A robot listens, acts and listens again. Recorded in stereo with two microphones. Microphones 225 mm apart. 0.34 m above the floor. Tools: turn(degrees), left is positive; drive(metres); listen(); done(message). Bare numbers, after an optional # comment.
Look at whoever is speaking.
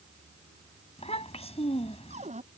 # The child speaking: about 30° left or 150° left.
turn(30)
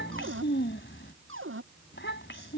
# So it is at 120° left.
turn(120)
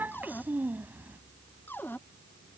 # The child speaking is now 10° right.
turn(-10)
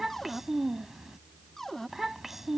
done("Facing the child speaking.")